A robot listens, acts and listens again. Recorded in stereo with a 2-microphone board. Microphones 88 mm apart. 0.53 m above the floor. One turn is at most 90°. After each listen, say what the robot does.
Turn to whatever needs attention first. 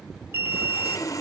Turn 25° right.
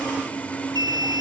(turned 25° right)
Turn 90° right.
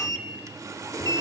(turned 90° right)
Turn 70° right.
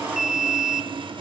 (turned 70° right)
Found it: an alarm, straight ahead, under 1 m away.